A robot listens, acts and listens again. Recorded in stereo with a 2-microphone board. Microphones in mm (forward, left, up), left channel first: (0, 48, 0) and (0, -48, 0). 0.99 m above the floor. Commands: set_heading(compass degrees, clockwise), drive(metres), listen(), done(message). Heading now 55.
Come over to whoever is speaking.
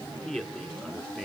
set_heading(85)
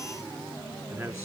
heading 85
set_heading(235)
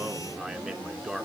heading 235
drive(1.0)
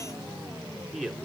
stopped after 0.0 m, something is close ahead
done("Something is in my way. I am facing the man speaking but have not reached it.")